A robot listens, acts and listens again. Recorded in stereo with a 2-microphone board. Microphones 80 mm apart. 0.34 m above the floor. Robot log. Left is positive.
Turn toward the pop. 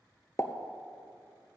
note: The pop: about 40° left or 140° left.
cmd yaw +40
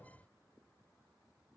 cmd idle
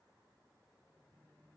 end: I heard a pop, but can't make it out now. It was about straight ahead or 100° left.